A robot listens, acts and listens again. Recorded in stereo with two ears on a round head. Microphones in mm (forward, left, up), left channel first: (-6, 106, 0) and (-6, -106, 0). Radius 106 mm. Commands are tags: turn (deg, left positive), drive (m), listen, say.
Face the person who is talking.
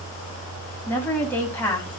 <turn deg="30"/>
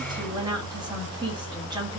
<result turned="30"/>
<turn deg="-20"/>
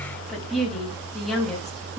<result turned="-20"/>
<say>Found it: a woman speaking, straight ahead, 2 to 4 m away.</say>